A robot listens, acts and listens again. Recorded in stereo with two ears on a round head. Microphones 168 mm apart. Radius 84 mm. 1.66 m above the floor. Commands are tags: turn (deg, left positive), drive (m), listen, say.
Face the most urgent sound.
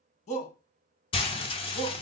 <turn deg="35"/>
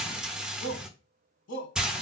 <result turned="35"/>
<turn deg="110"/>
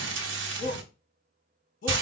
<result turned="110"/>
<turn deg="45"/>
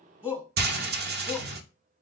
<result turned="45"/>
<turn deg="-10"/>
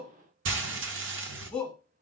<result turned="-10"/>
<say>Found it: a shout, straight ahead.</say>